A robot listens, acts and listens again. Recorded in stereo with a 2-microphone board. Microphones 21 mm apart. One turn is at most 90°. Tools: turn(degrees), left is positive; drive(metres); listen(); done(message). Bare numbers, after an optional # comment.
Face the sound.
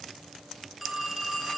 turn(-30)
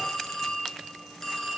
# So it is at 25° left.
turn(25)
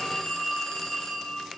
# The phone ringing is now 25° left.
turn(25)
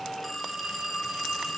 done("Found it: a phone ringing, straight ahead, 2 to 4 m away.")